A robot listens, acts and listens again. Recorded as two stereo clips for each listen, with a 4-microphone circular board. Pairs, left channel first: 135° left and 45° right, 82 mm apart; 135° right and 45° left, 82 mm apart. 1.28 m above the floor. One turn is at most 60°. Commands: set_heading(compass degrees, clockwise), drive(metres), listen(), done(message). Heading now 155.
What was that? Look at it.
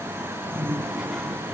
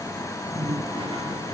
set_heading(115)
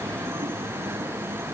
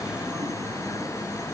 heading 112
listen()
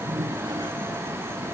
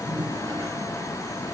done("Facing the toilet flushing.")